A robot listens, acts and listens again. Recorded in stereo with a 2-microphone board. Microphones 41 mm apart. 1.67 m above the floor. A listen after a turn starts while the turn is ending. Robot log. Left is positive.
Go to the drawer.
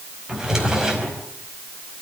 cmd yaw -30
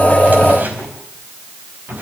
note: So it is at 130° right.
cmd yaw -130
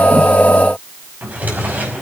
note: The drawer is now 45° right.
cmd yaw -45
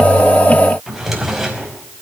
cmd fwd 1.0
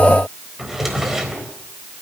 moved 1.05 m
cmd fwd 1.0
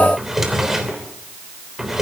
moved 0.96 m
cmd fwd 1.0
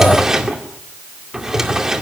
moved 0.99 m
note: The drawer is now 15° right.
cmd yaw -15
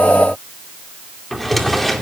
cmd fwd 1.0
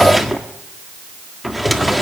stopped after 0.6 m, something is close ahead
end: Arrived at the drawer, straight ahead.